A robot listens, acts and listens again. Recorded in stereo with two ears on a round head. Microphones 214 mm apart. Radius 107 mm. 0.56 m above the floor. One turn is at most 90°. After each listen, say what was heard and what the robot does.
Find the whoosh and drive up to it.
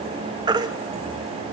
Keep listening.
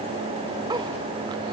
Keep listening.
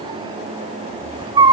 I can't make out a whoosh to turn to.